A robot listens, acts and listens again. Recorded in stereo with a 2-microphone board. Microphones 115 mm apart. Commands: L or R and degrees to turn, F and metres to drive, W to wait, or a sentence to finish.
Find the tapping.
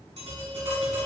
R90
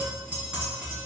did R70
R10
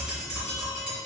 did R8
Found it: tapping, straight ahead, 2 to 4 m away.